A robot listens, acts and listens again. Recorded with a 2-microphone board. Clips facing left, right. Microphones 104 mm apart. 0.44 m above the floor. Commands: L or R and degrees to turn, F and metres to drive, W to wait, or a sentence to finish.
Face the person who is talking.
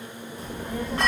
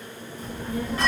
L60
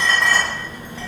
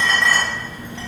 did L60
L40
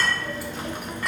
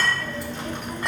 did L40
L10
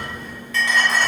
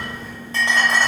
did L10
Found it: a child speaking, straight ahead, under 1 m away.